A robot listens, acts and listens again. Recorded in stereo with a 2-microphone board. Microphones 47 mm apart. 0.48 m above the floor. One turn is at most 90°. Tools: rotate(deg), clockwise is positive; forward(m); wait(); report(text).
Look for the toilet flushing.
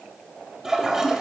rotate(30)
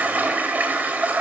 rotate(90)
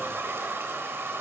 rotate(75)
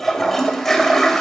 report("Found it: a toilet flushing, straight ahead, 2 to 4 m away.")